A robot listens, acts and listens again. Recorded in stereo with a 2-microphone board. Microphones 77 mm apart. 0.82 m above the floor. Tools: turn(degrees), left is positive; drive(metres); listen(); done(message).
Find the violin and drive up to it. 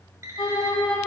turn(degrees=90)
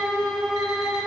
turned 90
drive(metres=1.0)
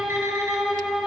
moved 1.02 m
drive(metres=1.0)
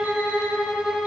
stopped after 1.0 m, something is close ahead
turn(degrees=-10)
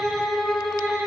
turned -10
done("I am next to the violin.")